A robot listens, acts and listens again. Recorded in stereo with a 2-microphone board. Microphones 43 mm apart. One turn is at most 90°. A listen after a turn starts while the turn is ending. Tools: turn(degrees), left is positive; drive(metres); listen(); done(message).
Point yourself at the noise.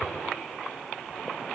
listen()
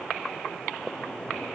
listen()
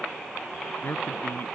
turn(degrees=55)
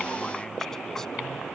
listen()
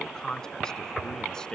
turn(degrees=15)
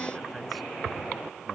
listen()
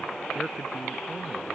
listen()
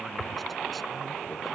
done("Facing where the man speaking came from. I can't hear it now.")